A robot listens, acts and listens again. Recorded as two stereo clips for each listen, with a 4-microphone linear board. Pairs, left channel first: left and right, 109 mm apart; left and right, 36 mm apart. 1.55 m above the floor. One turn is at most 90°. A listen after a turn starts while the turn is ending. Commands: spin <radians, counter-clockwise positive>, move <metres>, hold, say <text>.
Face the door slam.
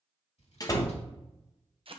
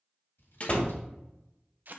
spin 0.61
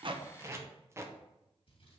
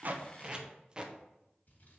hold
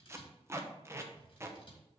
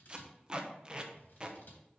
say I heard a door slam, but can't make it out now. It was about straight ahead or 110° left.